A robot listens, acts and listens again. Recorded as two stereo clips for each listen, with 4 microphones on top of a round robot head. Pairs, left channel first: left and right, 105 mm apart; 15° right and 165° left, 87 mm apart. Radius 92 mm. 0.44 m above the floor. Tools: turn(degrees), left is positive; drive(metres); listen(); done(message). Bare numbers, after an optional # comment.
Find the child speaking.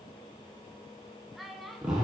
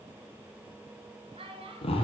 # The child speaking: straight behind.
turn(180)
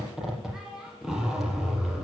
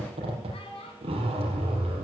done("Found it: a child speaking, straight ahead.")